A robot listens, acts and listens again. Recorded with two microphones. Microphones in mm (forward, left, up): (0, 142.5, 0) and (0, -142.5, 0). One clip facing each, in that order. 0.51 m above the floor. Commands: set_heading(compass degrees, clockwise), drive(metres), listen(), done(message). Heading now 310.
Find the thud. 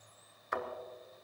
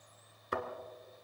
set_heading(345)
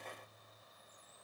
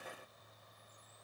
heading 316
listen()
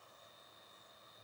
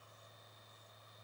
done("I heard a thud, but can't make it out now. It was about 30° right or 135° right.")